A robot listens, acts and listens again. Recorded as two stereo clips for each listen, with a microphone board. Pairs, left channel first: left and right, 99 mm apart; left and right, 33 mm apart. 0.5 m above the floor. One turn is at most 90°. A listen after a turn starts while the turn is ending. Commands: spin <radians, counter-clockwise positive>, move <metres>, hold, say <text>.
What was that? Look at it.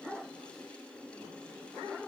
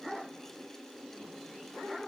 hold
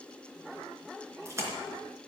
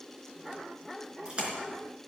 spin -0.52
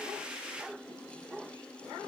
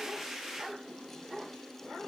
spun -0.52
hold
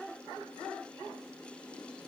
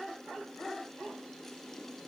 say I heard a splash, but can't make it out now. It was about straight ahead or 120° right.